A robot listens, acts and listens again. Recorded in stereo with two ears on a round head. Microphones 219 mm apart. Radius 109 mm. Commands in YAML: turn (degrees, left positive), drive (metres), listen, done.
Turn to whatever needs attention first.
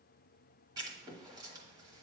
listen: true
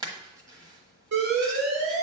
turn: -65
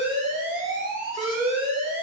turn: -50
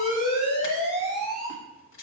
done: "Facing the alarm."